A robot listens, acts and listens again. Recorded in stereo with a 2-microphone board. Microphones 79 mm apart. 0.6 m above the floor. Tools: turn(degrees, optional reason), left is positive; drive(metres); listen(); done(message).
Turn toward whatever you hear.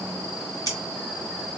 turn(degrees=50, reason="The scissors: about 50° left or 130° left.")
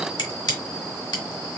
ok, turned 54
turn(degrees=75, reason="So it is at 75° left.")
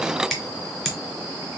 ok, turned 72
done("Facing the scissors, 1 to 2 m away.")